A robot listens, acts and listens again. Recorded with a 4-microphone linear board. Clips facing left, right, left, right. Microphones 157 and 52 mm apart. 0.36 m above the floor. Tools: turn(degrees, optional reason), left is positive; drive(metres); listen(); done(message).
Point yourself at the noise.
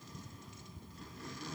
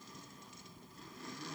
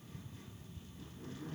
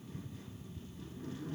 listen()
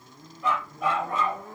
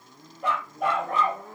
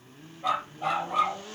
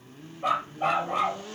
turn(degrees=-65, reason="The dog barking: about 65° right or 115° right.")
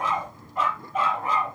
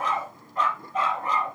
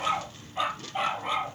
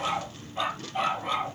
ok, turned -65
turn(degrees=10, reason="So it is at 10° left.")
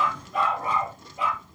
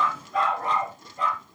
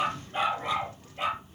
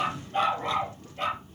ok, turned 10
turn(degrees=10, reason="The dog barking is now 10° left.")
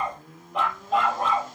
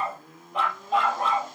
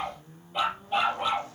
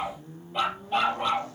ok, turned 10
done("Found it: a dog barking, straight ahead.")